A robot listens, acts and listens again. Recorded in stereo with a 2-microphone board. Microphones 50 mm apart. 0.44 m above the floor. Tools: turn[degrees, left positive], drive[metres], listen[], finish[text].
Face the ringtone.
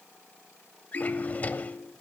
Action: turn[90]
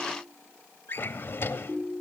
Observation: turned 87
Thought: So it is at 10° right.
Action: turn[-10]
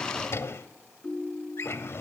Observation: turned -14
Action: finish[Facing the ringtone, over 4 m away.]